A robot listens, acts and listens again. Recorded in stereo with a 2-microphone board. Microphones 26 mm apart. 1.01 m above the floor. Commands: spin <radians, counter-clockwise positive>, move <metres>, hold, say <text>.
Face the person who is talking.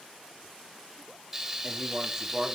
spin -0.52
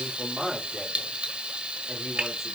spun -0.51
say Facing the man speaking.